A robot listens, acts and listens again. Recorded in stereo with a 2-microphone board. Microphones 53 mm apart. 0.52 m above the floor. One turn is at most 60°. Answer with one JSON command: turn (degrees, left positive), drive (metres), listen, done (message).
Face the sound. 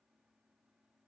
{"listen": true}
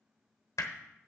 {"turn": 60}
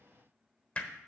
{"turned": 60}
{"turn": 25}
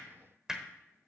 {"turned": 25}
{"turn": -10}
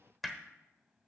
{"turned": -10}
{"done": "Facing the hammering, 1 to 2 m away."}